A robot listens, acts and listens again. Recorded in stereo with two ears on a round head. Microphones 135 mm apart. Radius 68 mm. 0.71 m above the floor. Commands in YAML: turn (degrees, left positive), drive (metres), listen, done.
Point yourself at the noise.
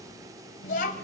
turn: 65
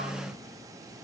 listen: true
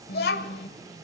turn: 80
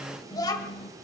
turn: 30
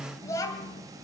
turn: 25
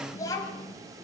turn: 25
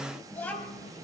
turn: 10
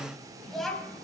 done: "Found it: a child speaking, straight ahead."